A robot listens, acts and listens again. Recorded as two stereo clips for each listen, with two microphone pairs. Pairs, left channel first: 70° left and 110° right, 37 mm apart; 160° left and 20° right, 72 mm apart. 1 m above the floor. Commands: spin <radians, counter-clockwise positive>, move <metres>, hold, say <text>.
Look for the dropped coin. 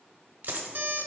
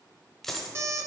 spin -2.01
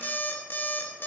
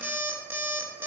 say I heard a dropped coin from this way, but can't make it out now.